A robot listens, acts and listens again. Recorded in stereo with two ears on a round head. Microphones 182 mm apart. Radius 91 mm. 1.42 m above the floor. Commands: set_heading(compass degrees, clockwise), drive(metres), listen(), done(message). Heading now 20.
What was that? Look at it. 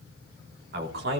set_heading(80)
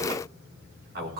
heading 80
set_heading(125)
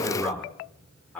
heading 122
done("Facing the man speaking, 2 to 4 m away.")